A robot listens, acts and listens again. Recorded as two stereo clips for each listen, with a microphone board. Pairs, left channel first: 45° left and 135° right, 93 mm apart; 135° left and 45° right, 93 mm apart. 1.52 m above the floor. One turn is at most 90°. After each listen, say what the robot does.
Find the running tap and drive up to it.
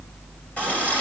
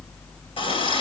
Turn 90° left.
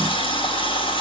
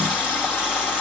Turn 35° left.
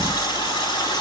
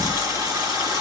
Drive 1.0 m forward.
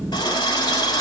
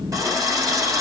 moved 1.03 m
Drive 1.0 m forward.
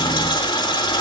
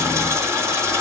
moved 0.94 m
Turn 10° left.
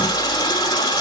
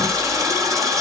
Drive 1.0 m forward.
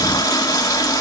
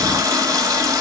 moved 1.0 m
Drive 1.0 m forward.
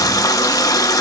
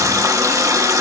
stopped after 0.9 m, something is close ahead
I am next to the running tap.